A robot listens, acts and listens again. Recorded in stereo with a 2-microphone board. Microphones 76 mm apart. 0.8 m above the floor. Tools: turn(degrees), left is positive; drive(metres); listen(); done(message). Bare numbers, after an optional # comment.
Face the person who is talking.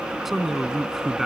turn(-30)
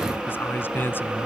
# So it is at 30° left.
turn(30)
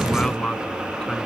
# The man speaking is now 10° left.
turn(10)
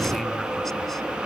listen()
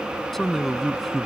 done("Found it: a man speaking, straight ahead.")